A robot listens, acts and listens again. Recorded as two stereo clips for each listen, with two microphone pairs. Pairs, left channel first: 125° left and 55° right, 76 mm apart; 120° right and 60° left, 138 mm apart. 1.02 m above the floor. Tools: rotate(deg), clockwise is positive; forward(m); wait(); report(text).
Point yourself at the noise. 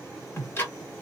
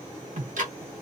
rotate(-65)
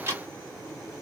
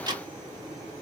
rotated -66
report("Facing the ticking.")